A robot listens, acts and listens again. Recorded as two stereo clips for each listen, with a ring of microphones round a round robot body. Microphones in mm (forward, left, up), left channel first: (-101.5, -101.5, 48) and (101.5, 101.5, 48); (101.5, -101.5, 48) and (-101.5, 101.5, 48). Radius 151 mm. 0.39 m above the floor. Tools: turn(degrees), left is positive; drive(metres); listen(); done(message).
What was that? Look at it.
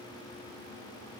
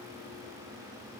listen()
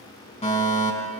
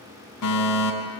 turn(degrees=-65)
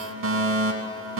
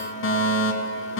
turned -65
done("Found it: a fire alarm, straight ahead.")